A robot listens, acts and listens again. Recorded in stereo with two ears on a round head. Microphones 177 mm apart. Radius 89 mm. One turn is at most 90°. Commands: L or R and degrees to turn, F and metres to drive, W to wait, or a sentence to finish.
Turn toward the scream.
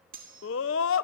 L75
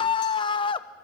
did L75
L25
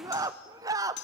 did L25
R20
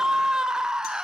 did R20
Facing the scream.